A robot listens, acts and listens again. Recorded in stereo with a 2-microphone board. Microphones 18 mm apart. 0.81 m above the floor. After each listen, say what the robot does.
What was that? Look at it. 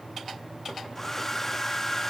Turn 15° left.
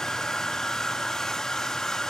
Turn 150° left.
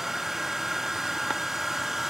Turn 20° right.
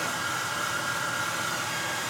Facing the hair dryer.